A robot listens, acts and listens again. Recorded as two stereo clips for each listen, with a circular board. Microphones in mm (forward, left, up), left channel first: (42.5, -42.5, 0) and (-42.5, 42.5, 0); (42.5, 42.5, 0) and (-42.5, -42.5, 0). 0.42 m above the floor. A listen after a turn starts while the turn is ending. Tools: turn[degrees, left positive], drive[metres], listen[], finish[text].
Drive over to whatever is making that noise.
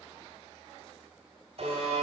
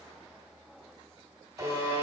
Thought: The buzzer: 160° left.
Action: turn[160]
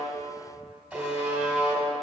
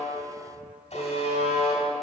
Thought: The buzzer is now 55° left.
Action: turn[55]
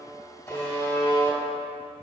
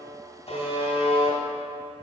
Thought: The buzzer is now 20° left.
Action: turn[20]
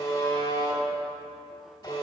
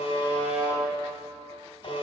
Thought: The buzzer is now 10° left.
Action: turn[10]
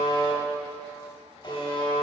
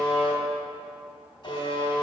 Action: drive[1.0]
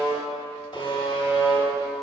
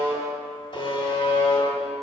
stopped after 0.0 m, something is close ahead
Action: finish[Something is in my way. I am facing the buzzer but have not reached it.]